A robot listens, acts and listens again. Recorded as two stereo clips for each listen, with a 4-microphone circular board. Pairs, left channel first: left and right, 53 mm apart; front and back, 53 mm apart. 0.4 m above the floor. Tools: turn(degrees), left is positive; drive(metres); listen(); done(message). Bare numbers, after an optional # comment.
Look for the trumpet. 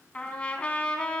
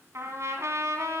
# The trumpet: 160° left.
turn(160)
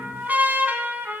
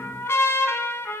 # The trumpet is now 35° right.
turn(-35)
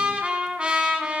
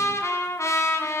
# The trumpet is now 20° right.
turn(-20)
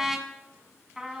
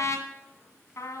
# The trumpet is now 10° right.
turn(-10)
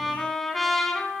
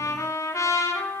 done("Found it: a trumpet, straight ahead, 1 to 2 m away.")